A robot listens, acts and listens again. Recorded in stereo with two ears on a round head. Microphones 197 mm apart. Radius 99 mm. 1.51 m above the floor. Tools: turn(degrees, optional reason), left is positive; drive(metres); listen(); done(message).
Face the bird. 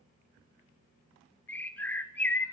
turn(degrees=30)
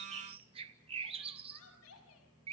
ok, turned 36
turn(degrees=-25, reason="So it is at 25° right.")
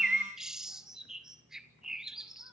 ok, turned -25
done("Facing the bird.")